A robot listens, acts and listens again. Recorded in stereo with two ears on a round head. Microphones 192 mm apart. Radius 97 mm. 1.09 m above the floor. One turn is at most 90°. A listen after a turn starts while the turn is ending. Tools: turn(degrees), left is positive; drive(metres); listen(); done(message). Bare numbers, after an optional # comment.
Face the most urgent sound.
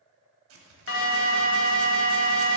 # The alarm: about 60° left or 120° left.
turn(60)
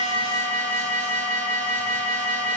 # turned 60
# So it is at 10° left.
turn(10)
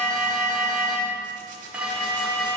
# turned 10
done("Facing the alarm.")